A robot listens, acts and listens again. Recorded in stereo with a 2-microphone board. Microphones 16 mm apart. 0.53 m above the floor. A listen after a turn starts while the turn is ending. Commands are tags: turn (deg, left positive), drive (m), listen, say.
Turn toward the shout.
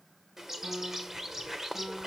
<listen/>
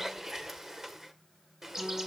<listen/>
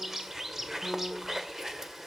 <say>I can't make out a shout to turn to.</say>